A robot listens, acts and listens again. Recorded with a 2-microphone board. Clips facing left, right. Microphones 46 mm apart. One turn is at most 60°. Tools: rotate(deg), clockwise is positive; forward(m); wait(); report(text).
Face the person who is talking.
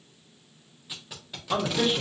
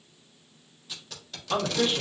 rotate(-30)
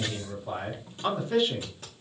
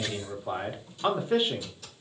rotate(25)
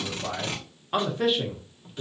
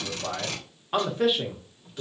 report("Found it: a man speaking, straight ahead.")